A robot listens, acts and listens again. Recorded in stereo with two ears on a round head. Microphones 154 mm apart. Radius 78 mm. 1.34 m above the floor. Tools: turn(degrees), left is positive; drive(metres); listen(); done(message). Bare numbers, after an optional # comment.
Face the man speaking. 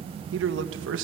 turn(-90)
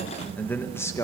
# So it is at 20° left.
turn(20)
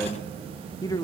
# The man speaking is now 25° left.
turn(25)
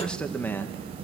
# The man speaking is now 15° left.
turn(15)
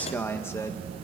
# The man speaking is now 15° left.
turn(15)
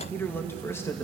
# The man speaking is now 15° left.
turn(15)
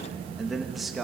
done("Found it: a man speaking, straight ahead.")